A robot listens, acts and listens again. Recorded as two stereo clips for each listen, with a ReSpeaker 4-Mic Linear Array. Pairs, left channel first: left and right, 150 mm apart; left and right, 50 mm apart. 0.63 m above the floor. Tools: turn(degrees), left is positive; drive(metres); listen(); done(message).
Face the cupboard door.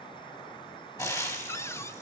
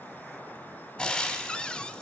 turn(degrees=20)
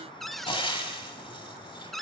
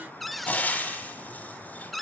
done("Found it: a cupboard door, straight ahead, under 1 m away.")